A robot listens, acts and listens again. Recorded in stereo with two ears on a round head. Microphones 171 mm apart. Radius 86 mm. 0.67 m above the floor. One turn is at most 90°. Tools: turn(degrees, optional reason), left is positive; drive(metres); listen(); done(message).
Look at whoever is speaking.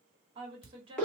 turn(degrees=-30, reason="The woman speaking: about 30° right or 150° right.")
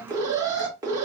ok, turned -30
listen()
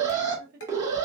turn(degrees=-90, reason="So it is at 115° right.")
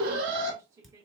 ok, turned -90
turn(degrees=-20, reason="The woman speaking is now 20° right.")
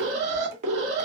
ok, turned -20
listen()
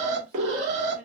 listen()
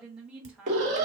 done("Found it: a woman speaking, straight ahead, 1 to 2 m away.")